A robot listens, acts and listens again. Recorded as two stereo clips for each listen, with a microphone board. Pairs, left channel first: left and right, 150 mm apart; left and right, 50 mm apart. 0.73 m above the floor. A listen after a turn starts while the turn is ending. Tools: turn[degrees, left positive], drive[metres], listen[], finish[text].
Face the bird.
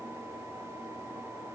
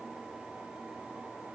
Action: listen[]
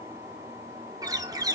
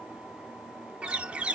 Thought: The bird: about 25° right or 155° right.
Action: turn[-25]
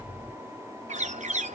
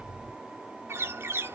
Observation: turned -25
Thought: So it is at 130° right.
Action: turn[-130]
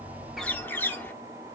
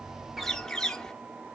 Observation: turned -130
Thought: The bird is now 15° left.
Action: turn[15]
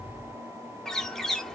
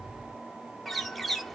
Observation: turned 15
Action: finish[Found it: a bird, straight ahead, under 1 m away.]